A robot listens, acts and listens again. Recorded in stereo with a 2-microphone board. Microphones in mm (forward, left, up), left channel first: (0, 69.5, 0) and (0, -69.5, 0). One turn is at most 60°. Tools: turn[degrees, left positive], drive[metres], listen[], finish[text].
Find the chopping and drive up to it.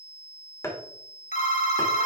Thought: The chopping: about 20° left or 160° left.
Action: turn[20]
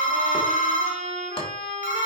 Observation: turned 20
Action: listen[]
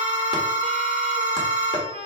Action: listen[]
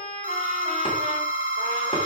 Action: finish[I heard chopping, but can't make it out now. It was about straight ahead or 140° left. I did not reach it.]